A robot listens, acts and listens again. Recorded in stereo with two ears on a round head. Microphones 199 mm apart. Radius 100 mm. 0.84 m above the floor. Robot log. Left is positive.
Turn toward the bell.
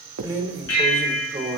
cmd yaw +90
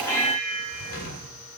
note: So it is at 10° left.
cmd yaw +10
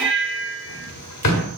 end: Facing the bell.